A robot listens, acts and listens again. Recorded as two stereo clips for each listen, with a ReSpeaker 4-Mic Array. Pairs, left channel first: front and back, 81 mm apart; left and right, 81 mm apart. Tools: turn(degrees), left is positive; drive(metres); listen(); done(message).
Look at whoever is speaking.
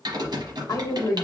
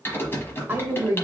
turn(degrees=-30)
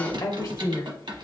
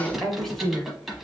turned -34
done("Found it: a woman speaking, straight ahead, 1 to 2 m away.")